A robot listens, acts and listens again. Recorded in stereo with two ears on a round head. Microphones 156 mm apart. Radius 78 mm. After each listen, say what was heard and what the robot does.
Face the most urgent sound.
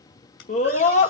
The scream: about 40° left or 140° left. Turn 40° left.
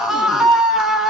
Facing the scream, 1 to 2 m away.